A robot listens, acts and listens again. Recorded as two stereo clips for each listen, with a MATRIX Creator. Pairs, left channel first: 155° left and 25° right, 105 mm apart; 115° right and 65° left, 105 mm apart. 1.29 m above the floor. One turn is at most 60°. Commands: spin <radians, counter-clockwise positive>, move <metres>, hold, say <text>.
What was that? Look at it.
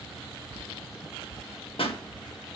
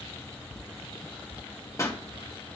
spin -1.05
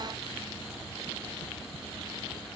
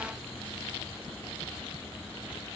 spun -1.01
spin -1.05
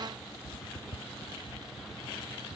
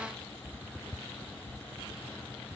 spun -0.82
spin -1.05
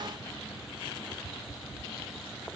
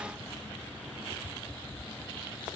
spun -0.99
spin -0.17
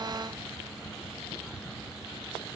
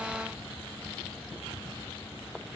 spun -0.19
say Facing where the pop came from. I can't hear it now.